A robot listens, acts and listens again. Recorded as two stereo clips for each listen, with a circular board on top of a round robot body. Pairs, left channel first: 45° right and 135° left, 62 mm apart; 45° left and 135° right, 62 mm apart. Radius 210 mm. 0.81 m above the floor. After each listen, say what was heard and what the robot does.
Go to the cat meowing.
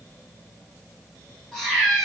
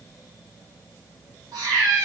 The cat meowing: 130° right. Turn 130° right.
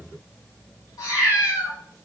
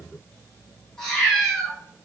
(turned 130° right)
The cat meowing is now 35° right. Turn 35° right.
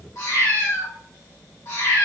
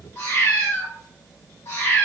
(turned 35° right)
Drive 1.0 m forward.
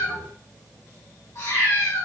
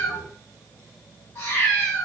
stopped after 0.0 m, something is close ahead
Blocked. The cat meowing is further on, straight ahead.